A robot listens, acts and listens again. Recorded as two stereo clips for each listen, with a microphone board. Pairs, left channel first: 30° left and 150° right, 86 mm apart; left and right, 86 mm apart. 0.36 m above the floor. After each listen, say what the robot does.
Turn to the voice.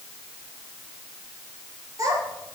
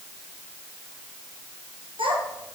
Turn 100° right.
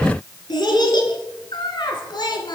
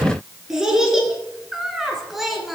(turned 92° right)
Found it: a child speaking, straight ahead.